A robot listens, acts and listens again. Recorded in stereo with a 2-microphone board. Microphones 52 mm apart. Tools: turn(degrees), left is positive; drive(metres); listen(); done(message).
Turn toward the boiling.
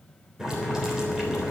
turn(degrees=-30)
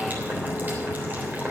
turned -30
turn(degrees=-140)
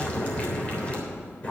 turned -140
turn(degrees=30)
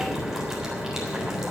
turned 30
turn(degrees=-10)
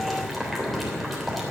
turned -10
done("Found it: boiling, straight ahead, 2 to 4 m away.")